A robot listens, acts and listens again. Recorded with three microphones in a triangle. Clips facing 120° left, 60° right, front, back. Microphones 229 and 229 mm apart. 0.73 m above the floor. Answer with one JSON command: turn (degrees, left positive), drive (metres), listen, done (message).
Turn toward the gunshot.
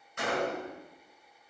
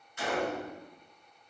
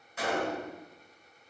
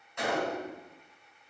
{"turn": 85}
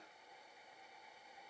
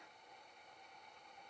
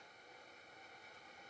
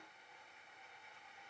{"done": "I heard a gunshot from this way, but can't make it out now."}